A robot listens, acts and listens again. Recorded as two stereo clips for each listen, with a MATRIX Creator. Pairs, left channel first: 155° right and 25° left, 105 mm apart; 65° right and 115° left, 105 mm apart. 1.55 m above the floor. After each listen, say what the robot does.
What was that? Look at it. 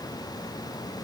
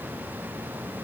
Keep listening.
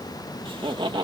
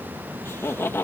Found it: laughter, straight ahead.